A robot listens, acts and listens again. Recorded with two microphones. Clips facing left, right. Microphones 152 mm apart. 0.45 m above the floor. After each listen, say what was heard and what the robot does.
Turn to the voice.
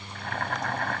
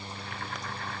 Keep listening.
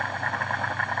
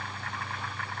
Keep listening.
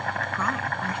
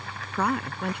The woman speaking: about 65° right or 115° right. Turn 65° right.
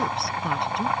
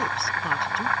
Facing the woman speaking.